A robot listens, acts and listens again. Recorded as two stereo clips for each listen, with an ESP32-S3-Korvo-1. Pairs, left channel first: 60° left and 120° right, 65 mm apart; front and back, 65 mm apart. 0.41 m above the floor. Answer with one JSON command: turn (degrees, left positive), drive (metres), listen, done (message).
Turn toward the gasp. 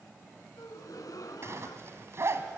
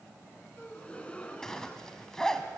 {"turn": 70}
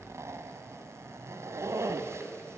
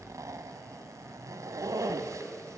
{"done": "I heard a gasp from this way, but can't make it out now."}